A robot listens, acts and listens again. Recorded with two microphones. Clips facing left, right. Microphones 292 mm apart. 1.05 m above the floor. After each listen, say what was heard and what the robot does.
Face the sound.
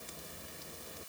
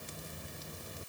Keep listening.
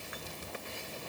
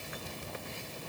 Keep listening.
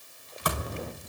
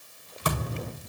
The thud: about 30° right or 150° right. Turn 30° right.
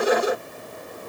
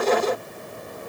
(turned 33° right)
Keep listening.
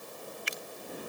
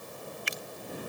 I heard a thud, but can't make it out now. It was about straight ahead or 115° right.